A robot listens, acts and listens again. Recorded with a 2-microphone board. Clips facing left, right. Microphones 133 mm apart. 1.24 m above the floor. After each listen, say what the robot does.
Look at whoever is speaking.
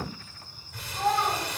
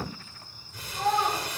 Turn 30° left.
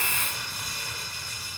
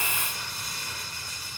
Keep listening.
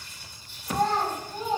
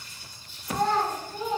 Turn 150° left.
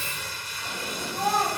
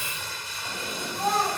Turn 45° left.
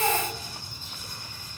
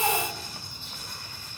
Keep listening.
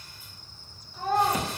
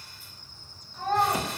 Found it: a child speaking, straight ahead.